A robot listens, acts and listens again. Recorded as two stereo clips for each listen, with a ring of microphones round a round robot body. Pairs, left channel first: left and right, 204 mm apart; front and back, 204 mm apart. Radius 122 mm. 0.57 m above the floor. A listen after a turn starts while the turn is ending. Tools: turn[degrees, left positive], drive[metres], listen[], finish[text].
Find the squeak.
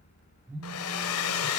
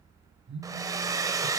Action: listen[]
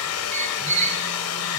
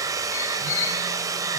Thought: The squeak: 35° right.
Action: turn[-35]
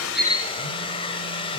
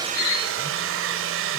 Thought: The squeak is now 20° left.
Action: turn[20]
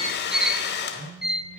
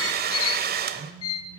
Action: finish[Found it: a squeak, straight ahead.]